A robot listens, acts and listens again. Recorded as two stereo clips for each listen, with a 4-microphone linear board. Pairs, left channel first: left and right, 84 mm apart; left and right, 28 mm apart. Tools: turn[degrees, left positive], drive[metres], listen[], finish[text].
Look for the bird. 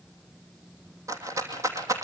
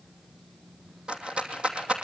Action: listen[]
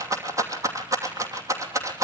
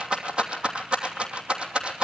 Action: listen[]
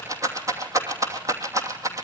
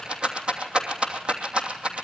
Action: finish[I can't make out a bird, only a rattle.]